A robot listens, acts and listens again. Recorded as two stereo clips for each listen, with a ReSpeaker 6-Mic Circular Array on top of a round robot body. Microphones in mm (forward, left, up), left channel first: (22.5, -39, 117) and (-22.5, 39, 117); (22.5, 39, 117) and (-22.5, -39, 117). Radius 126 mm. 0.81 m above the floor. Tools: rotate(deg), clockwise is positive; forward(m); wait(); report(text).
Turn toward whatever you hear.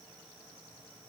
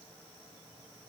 wait()
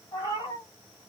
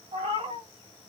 rotate(105)
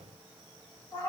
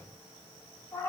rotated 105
report("Facing the cat meowing.")